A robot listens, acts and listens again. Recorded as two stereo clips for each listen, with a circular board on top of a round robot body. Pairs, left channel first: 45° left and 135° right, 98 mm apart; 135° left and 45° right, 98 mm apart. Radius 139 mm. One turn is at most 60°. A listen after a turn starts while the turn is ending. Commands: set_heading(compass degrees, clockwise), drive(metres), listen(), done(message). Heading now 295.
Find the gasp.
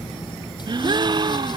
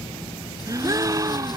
set_heading(355)
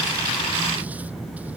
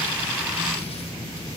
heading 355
set_heading(30)
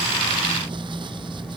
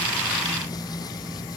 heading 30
done("I heard a gasp from this way, but can't make it out now.")